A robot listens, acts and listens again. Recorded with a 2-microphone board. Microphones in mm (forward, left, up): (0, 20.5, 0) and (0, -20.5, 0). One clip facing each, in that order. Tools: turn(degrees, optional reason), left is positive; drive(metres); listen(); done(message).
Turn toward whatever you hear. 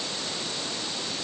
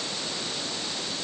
listen()
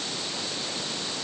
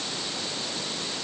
listen()
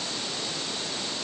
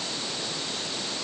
done("I can't make out anything to turn to.")